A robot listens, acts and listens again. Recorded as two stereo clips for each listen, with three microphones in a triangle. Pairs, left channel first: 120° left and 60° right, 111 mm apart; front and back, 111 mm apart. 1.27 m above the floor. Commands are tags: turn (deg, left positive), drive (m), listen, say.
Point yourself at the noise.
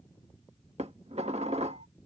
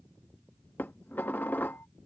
<turn deg="-70"/>
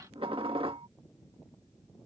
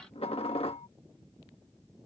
<turn deg="-25"/>
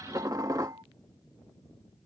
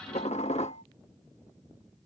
<say>Found it: dishes clattering, straight ahead.</say>